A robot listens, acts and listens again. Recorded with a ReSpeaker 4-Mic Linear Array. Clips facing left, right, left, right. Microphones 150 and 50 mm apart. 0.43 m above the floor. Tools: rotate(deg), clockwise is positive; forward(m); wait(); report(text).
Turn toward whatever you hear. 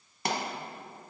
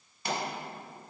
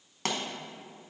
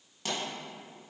rotate(-75)
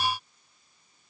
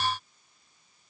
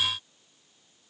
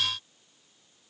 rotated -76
wait()
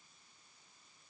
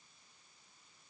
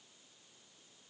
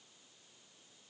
report("I heard a pop, but can't make it out now. It was about straight ahead or 30° left.")